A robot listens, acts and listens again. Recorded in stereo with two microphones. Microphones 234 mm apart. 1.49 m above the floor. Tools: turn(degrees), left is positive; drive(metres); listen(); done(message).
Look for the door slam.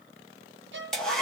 listen()
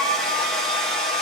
listen()
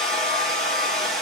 done("I can't make out a door slam, only a hair dryer and a violin.")